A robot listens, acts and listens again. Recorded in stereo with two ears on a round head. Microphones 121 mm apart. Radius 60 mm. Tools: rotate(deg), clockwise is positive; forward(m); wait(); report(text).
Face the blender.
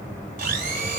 rotate(70)
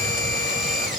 report("Found it: a blender, straight ahead.")